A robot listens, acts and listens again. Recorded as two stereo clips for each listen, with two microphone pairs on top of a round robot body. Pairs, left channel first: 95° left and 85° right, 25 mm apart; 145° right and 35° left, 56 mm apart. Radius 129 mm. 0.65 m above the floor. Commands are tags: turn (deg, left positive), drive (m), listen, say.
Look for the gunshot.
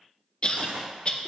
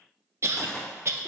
<turn deg="-65"/>
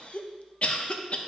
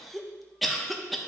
<say>I heard a gunshot from this way, but can't make it out now.</say>